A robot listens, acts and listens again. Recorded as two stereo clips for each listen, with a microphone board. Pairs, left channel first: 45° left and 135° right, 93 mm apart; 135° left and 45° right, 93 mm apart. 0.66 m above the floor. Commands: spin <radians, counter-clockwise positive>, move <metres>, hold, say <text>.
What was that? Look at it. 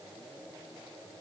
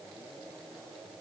hold
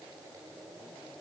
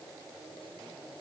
hold
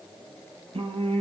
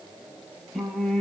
spin -2.44
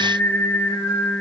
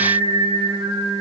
spin -0.52
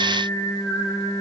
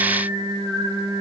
spin -0.17
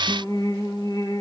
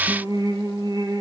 say Found it: singing, straight ahead, 2 to 4 m away.